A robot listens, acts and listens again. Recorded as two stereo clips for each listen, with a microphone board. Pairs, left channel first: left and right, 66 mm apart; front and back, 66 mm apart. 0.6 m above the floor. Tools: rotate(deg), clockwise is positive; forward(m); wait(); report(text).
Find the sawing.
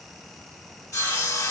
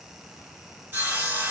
rotate(-125)
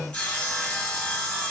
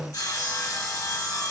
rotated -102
rotate(-20)
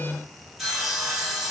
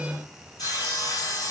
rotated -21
report("Facing the sawing, 1 to 2 m away.")